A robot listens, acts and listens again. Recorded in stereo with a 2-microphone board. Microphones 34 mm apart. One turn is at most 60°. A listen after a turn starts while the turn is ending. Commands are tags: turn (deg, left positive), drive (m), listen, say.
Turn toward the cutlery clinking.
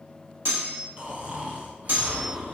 <turn deg="-60"/>
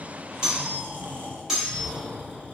<turn deg="-10"/>
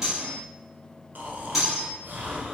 <say>Found it: cutlery clinking, straight ahead.</say>